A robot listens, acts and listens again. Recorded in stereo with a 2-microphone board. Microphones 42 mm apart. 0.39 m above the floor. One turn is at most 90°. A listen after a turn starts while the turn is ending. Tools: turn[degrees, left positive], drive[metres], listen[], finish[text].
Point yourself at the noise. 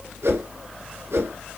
Action: turn[-90]
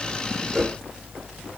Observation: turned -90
Thought: So it is at 10° right.
Action: turn[-10]
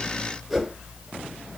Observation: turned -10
Action: finish[Found it: a whoosh, straight ahead, 1 to 2 m away.]